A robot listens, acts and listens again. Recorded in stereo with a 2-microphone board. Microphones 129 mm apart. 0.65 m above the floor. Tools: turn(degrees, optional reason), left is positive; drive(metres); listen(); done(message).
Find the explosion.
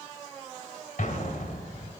turn(degrees=90)
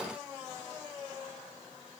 done("I heard an explosion from this way, but can't make it out now.")